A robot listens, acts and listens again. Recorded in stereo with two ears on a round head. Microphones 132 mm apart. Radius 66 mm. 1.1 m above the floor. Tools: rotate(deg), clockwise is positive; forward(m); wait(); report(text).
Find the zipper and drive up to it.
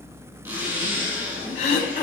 rotate(20)
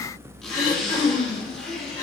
forward(1.0)
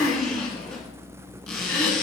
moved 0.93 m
forward(1.0)
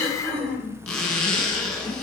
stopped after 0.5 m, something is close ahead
report("I am next to the zipper.")